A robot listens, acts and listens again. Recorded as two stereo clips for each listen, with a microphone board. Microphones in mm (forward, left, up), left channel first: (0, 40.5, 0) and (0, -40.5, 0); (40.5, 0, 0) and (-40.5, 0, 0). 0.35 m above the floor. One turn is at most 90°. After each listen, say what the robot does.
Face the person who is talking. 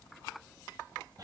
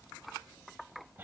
Keep listening.
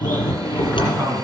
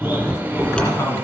Turn 55° right.
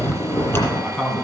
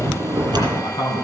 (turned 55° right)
Found it: a man speaking, straight ahead, 2 to 4 m away.